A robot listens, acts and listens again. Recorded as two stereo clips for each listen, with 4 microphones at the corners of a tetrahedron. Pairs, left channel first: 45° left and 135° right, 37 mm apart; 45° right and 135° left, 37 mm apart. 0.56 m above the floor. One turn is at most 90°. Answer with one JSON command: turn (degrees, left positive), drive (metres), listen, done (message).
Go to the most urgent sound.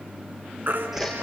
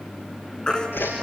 {"turn": -90}
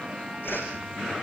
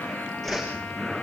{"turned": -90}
{"turn": -25}
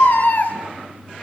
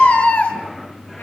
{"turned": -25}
{"turn": 10}
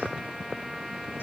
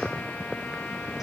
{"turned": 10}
{"listen": true}
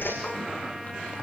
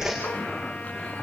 {"listen": true}
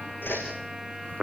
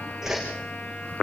{"done": "Facing where the baby crying came from. I can't hear it now. I did not reach it."}